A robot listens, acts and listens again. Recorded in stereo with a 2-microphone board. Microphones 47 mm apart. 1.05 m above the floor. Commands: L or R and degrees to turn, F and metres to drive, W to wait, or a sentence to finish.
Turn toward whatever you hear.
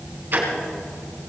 R45
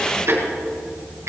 R90
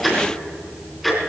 Facing the ticking, 2 to 4 m away.